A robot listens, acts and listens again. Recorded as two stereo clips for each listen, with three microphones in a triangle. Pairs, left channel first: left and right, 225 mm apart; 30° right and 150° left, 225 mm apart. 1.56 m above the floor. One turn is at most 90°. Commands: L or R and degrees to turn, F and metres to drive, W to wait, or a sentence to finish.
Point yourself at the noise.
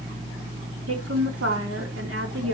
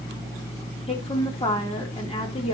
R90
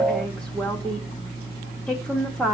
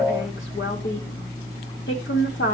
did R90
Facing the woman speaking.